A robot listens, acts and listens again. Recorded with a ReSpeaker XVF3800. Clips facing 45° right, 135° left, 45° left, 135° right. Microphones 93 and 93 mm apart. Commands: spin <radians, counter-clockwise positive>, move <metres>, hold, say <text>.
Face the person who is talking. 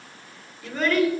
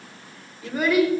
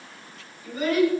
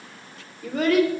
spin -2.53
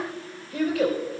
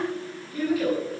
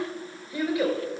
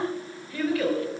spin -0.44
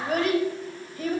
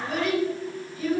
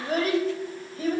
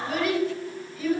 say Facing the child speaking, over 4 m away.